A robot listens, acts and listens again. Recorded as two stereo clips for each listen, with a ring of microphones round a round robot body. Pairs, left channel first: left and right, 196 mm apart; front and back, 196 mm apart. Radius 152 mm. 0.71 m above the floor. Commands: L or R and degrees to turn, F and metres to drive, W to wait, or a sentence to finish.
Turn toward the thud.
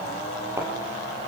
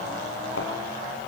R15
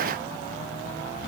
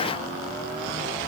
Facing where the thud came from. I can't hear it now.